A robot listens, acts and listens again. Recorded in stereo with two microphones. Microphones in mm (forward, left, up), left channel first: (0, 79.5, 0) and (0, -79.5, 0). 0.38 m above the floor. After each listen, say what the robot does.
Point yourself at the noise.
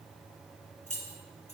Turn 50° left.
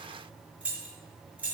Turn 10° right.
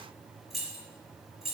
Facing the keys jangling, over 4 m away.